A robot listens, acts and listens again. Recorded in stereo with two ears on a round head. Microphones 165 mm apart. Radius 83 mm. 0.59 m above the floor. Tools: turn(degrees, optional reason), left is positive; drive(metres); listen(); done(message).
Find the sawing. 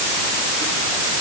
listen()
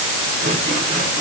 listen()
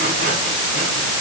done("I can't make out sawing to turn to.")